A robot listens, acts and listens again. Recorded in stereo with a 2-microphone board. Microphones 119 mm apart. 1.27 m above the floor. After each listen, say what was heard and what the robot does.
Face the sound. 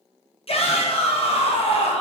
The shout: about 55° left or 125° left. Turn 55° left.
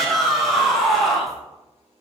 Facing the shout, under 1 m away.